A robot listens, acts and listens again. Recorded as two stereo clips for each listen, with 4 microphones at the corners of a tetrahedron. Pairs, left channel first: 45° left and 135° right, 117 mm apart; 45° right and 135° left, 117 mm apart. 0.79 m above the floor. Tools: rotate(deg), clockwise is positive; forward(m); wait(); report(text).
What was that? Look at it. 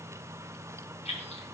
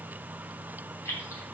rotate(-20)
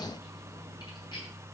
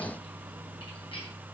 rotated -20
wait()
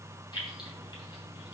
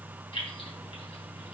report("Facing the keys jangling, 2 to 4 m away.")